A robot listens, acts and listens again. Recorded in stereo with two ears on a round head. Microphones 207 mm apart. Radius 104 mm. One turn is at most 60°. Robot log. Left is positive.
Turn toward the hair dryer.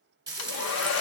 note: The hair dryer: about 50° left or 130° left.
cmd yaw +50
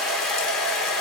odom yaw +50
end: Facing the hair dryer, under 1 m away.